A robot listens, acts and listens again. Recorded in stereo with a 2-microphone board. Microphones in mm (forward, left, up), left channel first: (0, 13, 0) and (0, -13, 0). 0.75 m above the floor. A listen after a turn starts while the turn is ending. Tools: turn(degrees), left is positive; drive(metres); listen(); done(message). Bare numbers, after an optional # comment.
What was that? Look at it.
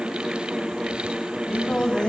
# The singing: about 30° left or 150° left.
turn(30)
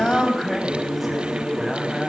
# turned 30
done("Found it: singing, straight ahead.")